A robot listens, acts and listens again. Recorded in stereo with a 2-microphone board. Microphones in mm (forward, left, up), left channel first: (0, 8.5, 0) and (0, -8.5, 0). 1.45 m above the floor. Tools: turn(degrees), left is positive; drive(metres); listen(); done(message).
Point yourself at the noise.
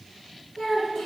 turn(degrees=90)
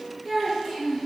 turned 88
turn(degrees=15)
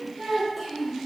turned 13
done("Found it: a child speaking, straight ahead.")